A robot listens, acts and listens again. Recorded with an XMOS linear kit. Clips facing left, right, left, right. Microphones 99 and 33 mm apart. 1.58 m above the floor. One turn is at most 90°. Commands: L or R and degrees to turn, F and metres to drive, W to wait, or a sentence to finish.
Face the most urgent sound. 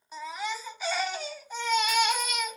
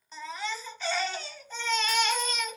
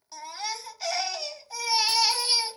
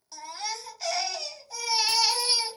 L30
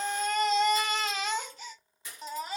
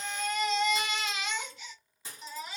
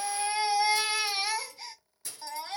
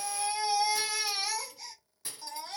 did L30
L90
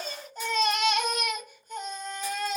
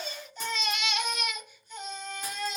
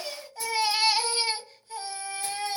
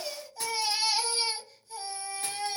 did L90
L50
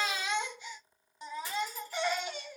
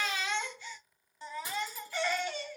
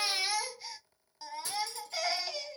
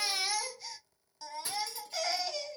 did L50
L20
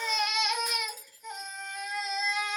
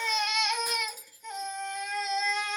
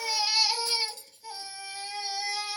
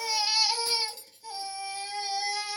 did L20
Facing the baby crying, under 1 m away.